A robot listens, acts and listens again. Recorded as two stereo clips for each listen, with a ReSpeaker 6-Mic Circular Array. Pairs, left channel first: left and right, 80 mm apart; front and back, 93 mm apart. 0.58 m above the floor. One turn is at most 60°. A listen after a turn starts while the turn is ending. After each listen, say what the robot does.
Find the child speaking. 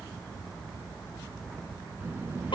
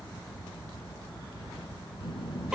Turn 25° right.
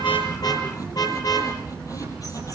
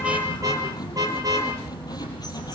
Turn 10° left.
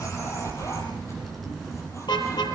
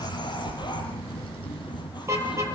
Found it: a child speaking, straight ahead.